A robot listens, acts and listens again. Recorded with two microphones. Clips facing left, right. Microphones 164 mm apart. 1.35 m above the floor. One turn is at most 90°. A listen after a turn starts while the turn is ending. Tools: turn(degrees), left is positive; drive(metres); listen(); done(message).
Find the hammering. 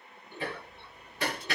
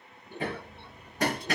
turn(degrees=-45)
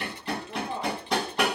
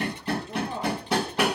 done("Found it: hammering, straight ahead, 1 to 2 m away.")